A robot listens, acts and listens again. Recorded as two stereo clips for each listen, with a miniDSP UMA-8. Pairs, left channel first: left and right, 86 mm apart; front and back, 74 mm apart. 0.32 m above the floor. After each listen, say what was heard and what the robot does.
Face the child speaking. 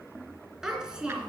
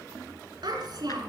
The child speaking: 165° right. Turn 165° right.
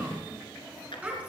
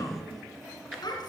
The child speaking is now 15° right. Turn 15° right.
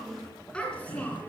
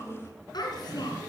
The child speaking is now 15° left. Turn 15° left.
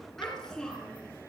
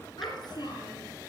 The child speaking is now 10° left. Turn 10° left.
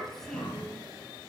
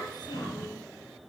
The child speaking is now 10° left. Turn 10° left.
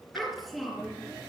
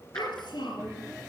Found it: a child speaking, straight ahead.